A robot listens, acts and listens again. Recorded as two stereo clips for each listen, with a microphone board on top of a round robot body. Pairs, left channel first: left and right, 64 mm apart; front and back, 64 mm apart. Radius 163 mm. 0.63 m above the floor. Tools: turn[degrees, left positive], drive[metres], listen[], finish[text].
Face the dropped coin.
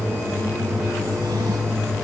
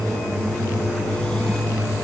Action: listen[]
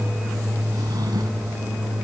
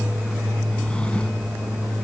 Action: listen[]
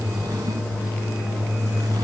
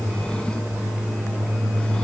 Action: finish[I can't make out a dropped coin to turn to.]